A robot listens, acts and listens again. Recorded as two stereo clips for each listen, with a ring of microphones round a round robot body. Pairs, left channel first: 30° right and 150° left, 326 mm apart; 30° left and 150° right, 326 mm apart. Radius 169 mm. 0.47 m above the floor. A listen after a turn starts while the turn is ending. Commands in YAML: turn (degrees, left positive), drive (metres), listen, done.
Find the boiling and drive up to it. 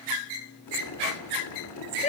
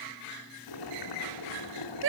turn: 10
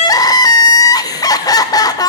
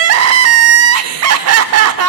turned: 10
listen: true
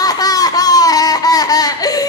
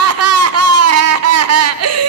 listen: true
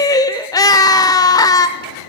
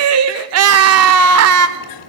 drive: 1.0
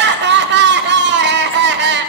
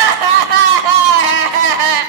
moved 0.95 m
listen: true
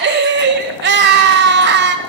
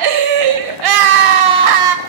listen: true
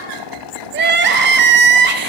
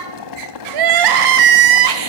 drive: 1.0
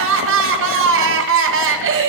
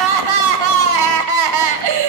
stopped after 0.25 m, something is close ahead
listen: true
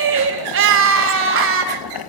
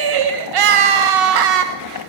done: "Arrived at the boiling, straight ahead."